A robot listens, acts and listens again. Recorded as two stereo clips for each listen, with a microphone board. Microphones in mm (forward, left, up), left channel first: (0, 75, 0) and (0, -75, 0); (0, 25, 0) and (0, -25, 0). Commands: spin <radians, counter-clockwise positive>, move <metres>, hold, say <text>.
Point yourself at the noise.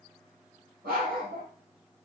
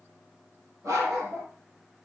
spin -1.57
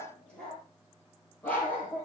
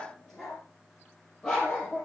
spin 0.17
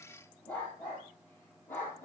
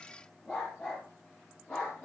spin 0.26
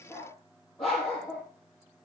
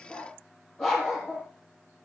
say Found it: a dog barking, straight ahead.